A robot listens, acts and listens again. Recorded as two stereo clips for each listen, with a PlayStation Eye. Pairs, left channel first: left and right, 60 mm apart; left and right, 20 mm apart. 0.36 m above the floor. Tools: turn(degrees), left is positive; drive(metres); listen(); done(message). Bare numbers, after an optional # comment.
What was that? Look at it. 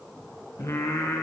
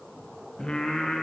# The singing: about 75° left or 105° left.
turn(75)
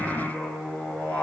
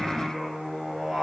# So it is at 20° left.
turn(20)
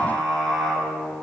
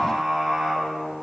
done("Found it: singing, straight ahead.")